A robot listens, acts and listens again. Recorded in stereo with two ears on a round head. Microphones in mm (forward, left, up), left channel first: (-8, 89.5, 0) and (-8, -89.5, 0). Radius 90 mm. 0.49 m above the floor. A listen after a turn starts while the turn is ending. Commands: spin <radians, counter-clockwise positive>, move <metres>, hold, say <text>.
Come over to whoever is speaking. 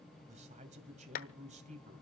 spin -0.70
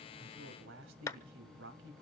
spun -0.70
spin -1.75
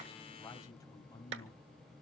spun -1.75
spin 0.26
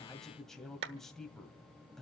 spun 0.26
move 1.0
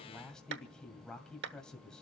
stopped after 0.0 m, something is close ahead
say Something is in my way. I am facing the man speaking but have not reached it.